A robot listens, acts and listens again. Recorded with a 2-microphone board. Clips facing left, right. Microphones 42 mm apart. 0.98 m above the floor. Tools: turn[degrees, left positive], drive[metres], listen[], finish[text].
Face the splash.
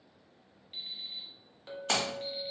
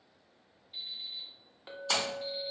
Thought: The splash: about 60° left or 120° left.
Action: turn[60]
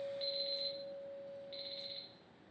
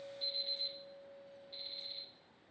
Action: listen[]
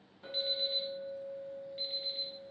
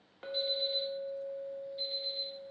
Action: finish[I heard a splash, but can't make it out now. It was about straight ahead or 60° left.]